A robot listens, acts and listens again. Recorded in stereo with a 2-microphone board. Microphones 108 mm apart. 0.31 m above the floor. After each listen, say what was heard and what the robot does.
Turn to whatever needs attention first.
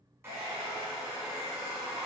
Keep listening.
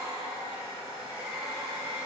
Keep listening.
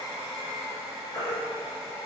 The baby crying: about 40° left or 140° left. Turn 40° left.
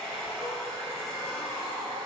Keep listening.
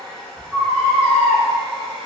Facing the baby crying, 1 to 2 m away.